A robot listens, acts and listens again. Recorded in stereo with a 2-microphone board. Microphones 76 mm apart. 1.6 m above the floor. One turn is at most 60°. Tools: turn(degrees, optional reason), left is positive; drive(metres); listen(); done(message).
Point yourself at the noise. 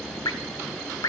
turn(degrees=60, reason="The dripping: about 60° left or 120° left.")
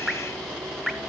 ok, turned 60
done("Found it: dripping, straight ahead, under 1 m away.")